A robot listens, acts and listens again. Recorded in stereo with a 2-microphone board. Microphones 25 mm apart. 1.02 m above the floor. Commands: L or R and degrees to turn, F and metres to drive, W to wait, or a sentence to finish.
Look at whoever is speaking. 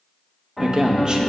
R30
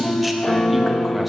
Found it: a man speaking, straight ahead, under 1 m away.